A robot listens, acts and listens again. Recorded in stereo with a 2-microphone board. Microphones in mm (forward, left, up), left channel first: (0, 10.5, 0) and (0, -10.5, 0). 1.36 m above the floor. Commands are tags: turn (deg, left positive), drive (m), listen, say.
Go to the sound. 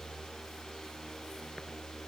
<listen/>
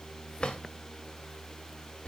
<turn deg="65"/>
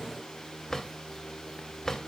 <turn deg="35"/>
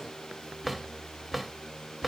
<drive m="1.0"/>
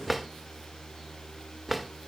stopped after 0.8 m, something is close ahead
<say>I am next to the drawer.</say>